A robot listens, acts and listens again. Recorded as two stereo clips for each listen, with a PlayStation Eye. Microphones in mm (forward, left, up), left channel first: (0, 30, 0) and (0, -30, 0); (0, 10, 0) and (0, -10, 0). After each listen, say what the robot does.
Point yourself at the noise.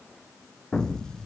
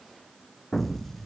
Turn 30° left.
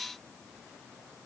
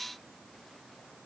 Keep listening.
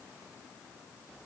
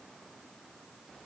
I heard an explosion, but can't make it out now. It was about 20° right or 140° left.